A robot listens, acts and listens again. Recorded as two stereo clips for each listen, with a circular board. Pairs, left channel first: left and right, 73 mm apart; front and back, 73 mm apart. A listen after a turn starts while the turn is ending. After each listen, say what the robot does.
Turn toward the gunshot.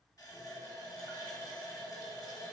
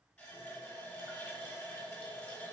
Keep listening.
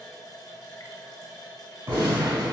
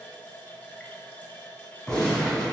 Turn 80° right.
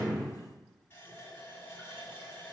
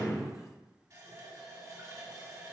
Facing where the gunshot came from. I can't hear it now.